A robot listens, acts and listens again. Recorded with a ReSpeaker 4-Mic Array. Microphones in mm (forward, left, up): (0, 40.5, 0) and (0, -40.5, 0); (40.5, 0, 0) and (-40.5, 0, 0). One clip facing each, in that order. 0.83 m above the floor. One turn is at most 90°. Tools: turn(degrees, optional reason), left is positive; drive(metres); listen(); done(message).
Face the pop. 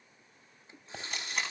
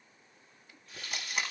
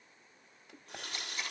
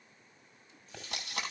turn(degrees=75, reason="The pop: 75° left.")
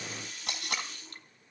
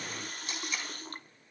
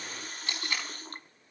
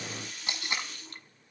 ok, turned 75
done("Facing where the pop came from. I can't hear it now.")